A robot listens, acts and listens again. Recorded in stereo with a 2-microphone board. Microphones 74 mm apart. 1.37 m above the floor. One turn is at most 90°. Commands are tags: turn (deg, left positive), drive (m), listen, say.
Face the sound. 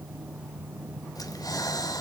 <turn deg="60"/>
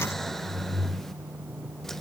<say>Facing the breathing, 1 to 2 m away.</say>